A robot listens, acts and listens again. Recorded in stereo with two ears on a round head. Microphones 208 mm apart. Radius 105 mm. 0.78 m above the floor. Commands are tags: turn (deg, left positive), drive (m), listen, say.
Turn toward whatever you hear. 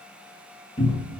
<turn deg="25"/>
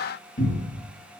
<turn deg="130"/>
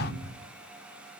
<turn deg="-20"/>
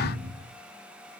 <turn deg="-10"/>
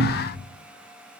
<say>Found it: a cupboard door, straight ahead.</say>